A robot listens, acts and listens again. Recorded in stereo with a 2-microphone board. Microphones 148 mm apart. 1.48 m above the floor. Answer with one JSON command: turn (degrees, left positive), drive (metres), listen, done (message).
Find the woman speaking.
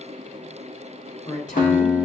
{"turn": 55}
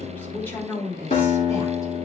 {"turn": 15}
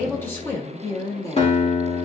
{"turn": 20}
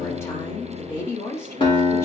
{"turn": 20}
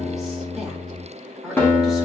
{"done": "Facing the woman speaking."}